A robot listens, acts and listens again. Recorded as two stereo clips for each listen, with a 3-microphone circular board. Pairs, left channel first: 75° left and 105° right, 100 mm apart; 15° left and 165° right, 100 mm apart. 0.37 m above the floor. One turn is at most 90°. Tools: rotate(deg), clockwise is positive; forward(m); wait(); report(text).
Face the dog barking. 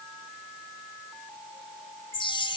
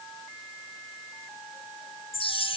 wait()
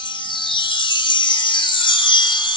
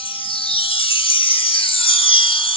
wait()
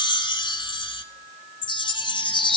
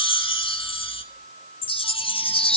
report("I can't make out a dog barking to turn to.")